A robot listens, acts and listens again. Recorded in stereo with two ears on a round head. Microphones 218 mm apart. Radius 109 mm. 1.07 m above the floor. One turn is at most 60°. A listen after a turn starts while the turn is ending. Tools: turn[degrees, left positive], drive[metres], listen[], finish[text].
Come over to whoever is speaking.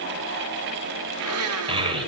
Thought: The child speaking: about 20° right or 160° right.
Action: turn[-20]
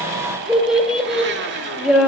Action: drive[1.0]
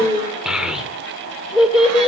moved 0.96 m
Action: drive[1.0]
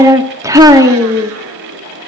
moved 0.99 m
Thought: The child speaking is now 15° right.
Action: turn[-15]
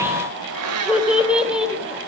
Action: drive[1.0]
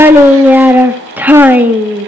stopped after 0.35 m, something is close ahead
Action: finish[I am next to the child speaking.]